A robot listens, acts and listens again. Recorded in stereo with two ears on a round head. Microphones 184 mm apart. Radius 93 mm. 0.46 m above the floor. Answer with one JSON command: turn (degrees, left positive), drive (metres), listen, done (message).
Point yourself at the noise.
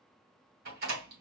{"turn": -50}
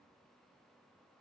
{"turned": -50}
{"listen": true}
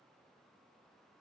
{"done": "I heard a door slam, but can't make it out now. It was about straight ahead or 80° right."}